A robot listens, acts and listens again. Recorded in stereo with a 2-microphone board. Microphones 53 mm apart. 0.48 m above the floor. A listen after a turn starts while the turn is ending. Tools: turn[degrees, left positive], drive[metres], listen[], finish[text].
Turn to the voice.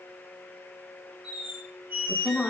Thought: The woman speaking: about 20° left or 160° left.
Action: turn[20]
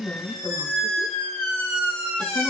Thought: So it is at 140° left.
Action: turn[140]
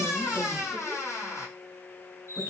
Action: listen[]
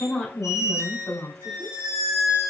Thought: The woman speaking is now 25° left.
Action: turn[25]
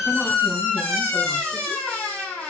Action: listen[]
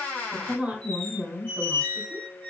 Thought: The woman speaking is now 20° right.
Action: turn[-20]
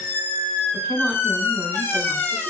Action: finish[Facing the woman speaking.]